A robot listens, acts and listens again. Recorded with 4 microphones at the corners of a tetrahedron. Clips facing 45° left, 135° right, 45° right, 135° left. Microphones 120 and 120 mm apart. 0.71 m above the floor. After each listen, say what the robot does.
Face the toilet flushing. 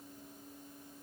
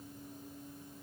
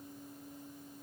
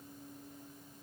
Keep listening.
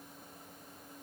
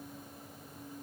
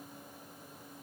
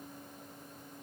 Keep listening.
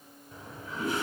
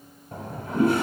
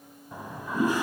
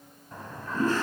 Turn 120° right.
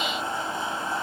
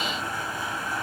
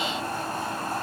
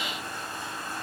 Turn 15° right.
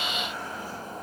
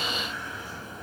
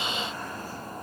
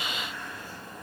Found it: a toilet flushing, straight ahead, 1 to 2 m away.